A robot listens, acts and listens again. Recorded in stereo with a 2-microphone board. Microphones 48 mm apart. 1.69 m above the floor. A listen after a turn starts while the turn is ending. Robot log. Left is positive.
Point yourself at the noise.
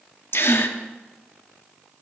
note: The gasp: about 55° left or 125° left.
cmd yaw +55
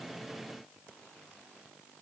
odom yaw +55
cmd idle
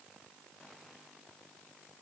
end: I heard a gasp, but can't make it out now. It was about straight ahead or 70° left.